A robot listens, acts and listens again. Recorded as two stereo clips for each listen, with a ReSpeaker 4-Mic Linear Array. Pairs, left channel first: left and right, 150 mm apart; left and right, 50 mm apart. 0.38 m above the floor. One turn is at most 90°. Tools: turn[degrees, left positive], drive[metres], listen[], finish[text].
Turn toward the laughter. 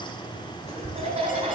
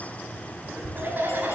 Thought: The laughter: about 40° right or 140° right.
Action: turn[-40]
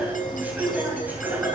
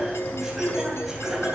Thought: So it is at 10° right.
Action: turn[-10]
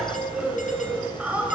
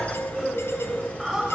Thought: The laughter is now 10° right.
Action: turn[-10]
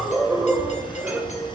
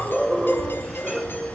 Thought: The laughter is now 10° right.
Action: turn[-10]
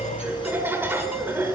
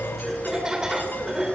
Thought: The laughter is now 15° right.
Action: turn[-15]
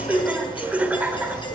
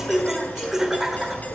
Thought: The laughter is now 10° right.
Action: turn[-10]
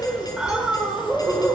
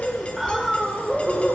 Action: finish[Facing the laughter.]